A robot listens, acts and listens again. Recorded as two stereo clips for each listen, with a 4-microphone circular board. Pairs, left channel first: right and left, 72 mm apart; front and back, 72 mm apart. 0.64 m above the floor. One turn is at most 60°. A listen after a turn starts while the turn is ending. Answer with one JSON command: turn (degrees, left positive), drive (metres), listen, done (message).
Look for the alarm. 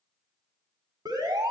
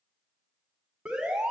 {"turn": 60}
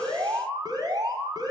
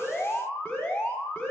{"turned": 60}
{"turn": 60}
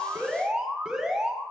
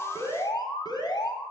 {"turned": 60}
{"done": "Found it: an alarm, straight ahead, 2 to 4 m away."}